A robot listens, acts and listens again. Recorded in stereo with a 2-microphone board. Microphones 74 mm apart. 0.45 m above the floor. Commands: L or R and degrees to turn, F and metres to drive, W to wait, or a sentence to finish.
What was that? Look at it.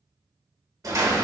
R55
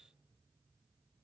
W
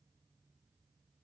I heard a door slam, but can't make it out now. It was about straight ahead or 70° right.